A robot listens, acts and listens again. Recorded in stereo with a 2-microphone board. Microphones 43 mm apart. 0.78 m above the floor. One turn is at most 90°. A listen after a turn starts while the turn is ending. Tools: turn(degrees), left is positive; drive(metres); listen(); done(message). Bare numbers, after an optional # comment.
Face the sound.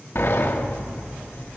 # The sliding door: about 70° left or 110° left.
turn(70)
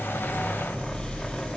# So it is at 25° left.
turn(25)
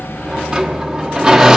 # The sliding door is now 15° right.
turn(-15)
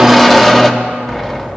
done("Facing the sliding door, 1 to 2 m away.")